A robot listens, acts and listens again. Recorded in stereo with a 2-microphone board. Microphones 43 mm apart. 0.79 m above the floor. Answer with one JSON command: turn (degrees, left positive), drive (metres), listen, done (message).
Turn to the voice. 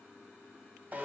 {"listen": true}
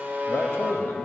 {"turn": 55}
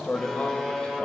{"turn": 35}
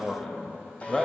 {"turn": 15}
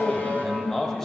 {"turn": 10}
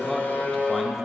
{"done": "Facing the man speaking, under 1 m away."}